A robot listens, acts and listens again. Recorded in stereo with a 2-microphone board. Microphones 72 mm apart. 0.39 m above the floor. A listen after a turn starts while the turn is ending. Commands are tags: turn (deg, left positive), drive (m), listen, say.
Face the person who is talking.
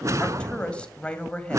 <turn deg="30"/>
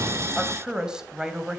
<turn deg="-10"/>
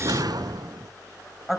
<say>Facing the woman speaking.</say>